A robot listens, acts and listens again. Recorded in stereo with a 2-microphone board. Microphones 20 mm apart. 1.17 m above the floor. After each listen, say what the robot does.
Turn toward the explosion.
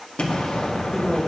Turn 65° left.
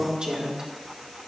Keep listening.
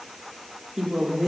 I heard an explosion, but can't make it out now. It was about straight ahead or 50° left.